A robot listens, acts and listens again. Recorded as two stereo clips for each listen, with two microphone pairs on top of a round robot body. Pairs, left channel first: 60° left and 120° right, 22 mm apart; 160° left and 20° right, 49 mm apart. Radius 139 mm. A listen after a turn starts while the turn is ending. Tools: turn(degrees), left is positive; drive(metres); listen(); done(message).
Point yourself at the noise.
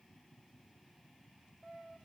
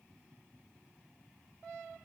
listen()
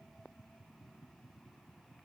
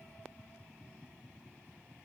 listen()
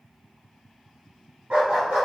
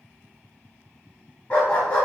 turn(degrees=-135)
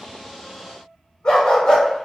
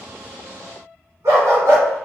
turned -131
turn(degrees=10)
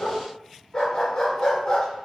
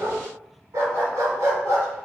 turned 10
done("Found it: a dog barking, straight ahead.")